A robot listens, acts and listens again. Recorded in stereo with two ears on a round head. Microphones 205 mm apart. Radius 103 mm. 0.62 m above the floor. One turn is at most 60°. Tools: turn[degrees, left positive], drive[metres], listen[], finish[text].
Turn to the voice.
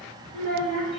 Thought: The child speaking: about 60° left or 120° left.
Action: turn[60]
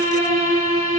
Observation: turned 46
Action: listen[]
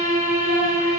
Action: listen[]
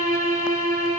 Action: finish[I heard a child speaking, but can't make it out now. It was about 15° left or 75° left.]